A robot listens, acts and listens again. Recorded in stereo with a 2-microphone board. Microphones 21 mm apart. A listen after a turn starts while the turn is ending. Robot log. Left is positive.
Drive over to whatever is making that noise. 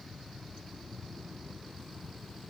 cmd idle
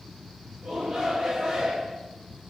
note: The shout: about 60° right or 120° right.
cmd yaw -60
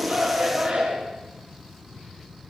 note: So it is at 55° right.
cmd yaw -55
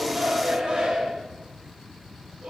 note: The shout is now 25° right.
cmd yaw -25
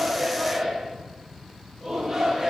cmd fwd 1.0
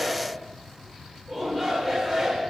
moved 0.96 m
cmd fwd 1.0
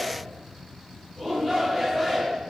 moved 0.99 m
cmd fwd 1.0
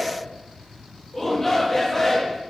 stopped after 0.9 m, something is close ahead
note: The shout is now 15° left.
cmd yaw +15
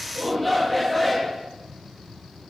end: I am next to the shout.